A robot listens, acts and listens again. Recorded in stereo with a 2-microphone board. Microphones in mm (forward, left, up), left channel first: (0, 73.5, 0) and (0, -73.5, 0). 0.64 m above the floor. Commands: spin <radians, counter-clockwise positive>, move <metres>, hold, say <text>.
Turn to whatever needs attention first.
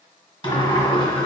hold
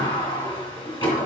hold
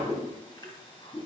say I can't make out anything urgent, only a whoosh and a sliding door.